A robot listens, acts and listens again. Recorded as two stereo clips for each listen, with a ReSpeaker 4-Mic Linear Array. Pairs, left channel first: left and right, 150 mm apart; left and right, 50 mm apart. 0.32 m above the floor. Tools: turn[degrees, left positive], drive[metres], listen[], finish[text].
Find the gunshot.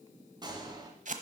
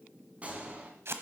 Thought: The gunshot: about 30° right or 150° right.
Action: turn[-30]
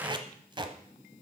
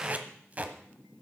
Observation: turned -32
Action: listen[]
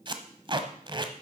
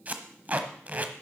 Action: finish[I heard a gunshot, but can't make it out now. It was about 5° left or 120° right.]